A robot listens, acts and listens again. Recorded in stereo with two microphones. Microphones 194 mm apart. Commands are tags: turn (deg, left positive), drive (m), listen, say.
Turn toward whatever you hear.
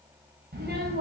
<turn deg="-55"/>
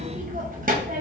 <turn deg="-55"/>
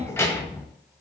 <turn deg="15"/>
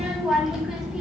<say>Found it: a child speaking, straight ahead.</say>